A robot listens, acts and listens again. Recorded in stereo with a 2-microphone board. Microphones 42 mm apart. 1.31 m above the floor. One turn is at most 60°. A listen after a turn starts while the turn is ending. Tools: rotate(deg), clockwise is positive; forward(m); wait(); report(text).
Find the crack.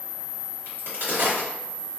rotate(60)
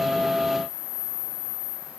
wait()
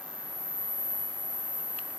report("I heard a crack, but can't make it out now. It was about straight ahead or 60° right.")